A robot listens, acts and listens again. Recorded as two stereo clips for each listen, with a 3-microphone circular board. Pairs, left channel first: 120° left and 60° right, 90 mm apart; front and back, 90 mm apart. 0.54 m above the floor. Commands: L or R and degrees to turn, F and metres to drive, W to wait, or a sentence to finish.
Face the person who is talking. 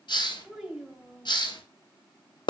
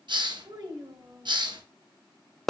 R140
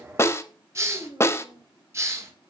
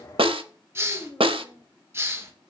R50
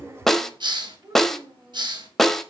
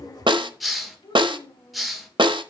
R25
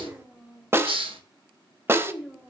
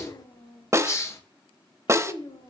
L10
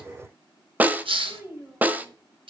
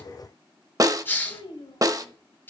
Found it: a child speaking, straight ahead.